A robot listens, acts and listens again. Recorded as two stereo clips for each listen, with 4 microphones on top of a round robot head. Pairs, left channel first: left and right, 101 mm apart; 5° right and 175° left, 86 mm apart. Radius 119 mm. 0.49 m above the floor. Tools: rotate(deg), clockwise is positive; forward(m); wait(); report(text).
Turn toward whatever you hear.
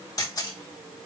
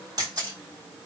rotate(-140)
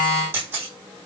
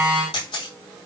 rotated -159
rotate(20)
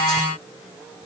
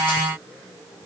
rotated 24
wait()
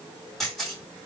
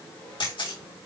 report("Found it: a camera shutter, straight ahead, over 4 m away.")